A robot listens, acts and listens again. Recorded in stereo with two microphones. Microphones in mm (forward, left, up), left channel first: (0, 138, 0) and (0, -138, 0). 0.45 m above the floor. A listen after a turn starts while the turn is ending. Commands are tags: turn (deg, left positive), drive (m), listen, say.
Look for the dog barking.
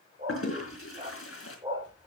<turn deg="-15"/>
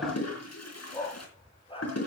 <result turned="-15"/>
<turn deg="20"/>
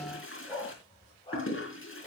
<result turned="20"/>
<turn deg="25"/>
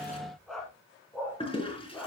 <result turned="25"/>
<say>Found it: a dog barking, straight ahead, 2 to 4 m away.</say>